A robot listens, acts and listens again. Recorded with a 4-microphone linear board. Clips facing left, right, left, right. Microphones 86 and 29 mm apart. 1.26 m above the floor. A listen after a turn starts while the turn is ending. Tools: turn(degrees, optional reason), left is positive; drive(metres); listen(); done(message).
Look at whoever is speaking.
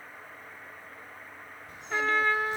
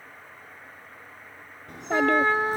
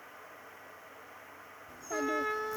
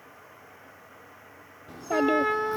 turn(degrees=-70, reason="The child speaking: about 70° right or 110° right.")
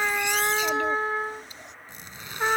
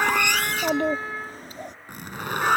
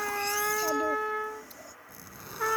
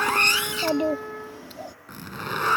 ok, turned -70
turn(degrees=-50, reason="So it is at 50° right.")
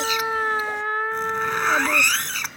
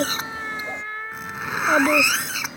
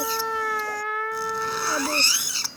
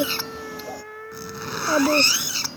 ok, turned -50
turn(degrees=-35, reason="The child speaking is now 35° right.")
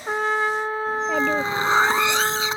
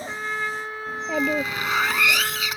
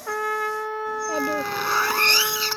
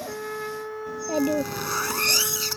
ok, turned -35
done("Found it: a child speaking, straight ahead.")